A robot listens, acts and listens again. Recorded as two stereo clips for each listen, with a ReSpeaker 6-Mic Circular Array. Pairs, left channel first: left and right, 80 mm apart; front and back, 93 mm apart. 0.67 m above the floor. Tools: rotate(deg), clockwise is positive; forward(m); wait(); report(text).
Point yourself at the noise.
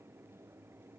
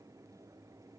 wait()
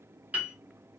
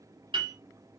rotate(160)
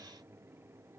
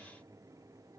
wait()
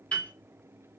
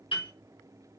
rotate(-15)
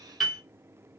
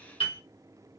report("Found it: a piano, straight ahead.")